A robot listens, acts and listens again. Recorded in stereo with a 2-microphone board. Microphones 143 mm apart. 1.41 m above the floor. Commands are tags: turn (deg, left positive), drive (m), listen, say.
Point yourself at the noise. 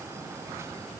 <listen/>
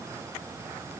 <listen/>
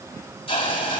<turn deg="40"/>
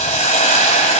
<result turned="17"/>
<turn deg="125"/>
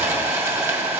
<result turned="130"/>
<turn deg="-20"/>
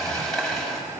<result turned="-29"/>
<say>Found it: a hiss, straight ahead.</say>